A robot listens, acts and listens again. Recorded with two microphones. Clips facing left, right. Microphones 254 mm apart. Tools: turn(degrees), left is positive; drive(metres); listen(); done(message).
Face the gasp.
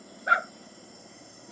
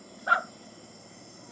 listen()
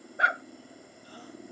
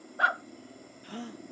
turn(degrees=-90)
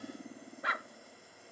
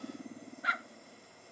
done("Facing where the gasp came from. I can't hear it now.")